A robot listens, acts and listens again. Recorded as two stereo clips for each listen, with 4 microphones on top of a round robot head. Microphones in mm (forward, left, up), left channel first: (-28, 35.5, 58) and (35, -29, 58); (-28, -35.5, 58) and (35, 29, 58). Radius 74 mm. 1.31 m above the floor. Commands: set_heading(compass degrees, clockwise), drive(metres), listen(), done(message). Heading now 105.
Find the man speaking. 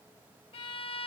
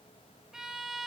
listen()
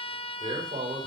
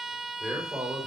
set_heading(150)
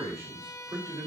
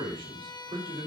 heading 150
set_heading(140)
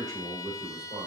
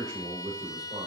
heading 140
done("Found it: a man speaking, straight ahead.")